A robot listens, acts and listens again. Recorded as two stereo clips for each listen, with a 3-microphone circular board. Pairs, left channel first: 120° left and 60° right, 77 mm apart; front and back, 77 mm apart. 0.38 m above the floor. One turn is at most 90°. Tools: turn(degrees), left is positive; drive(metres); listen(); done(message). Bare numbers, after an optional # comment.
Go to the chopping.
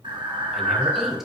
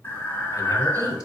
listen()
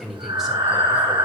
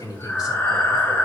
listen()
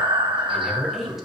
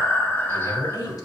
done("I can't make out chopping, only breathing and a woman speaking.")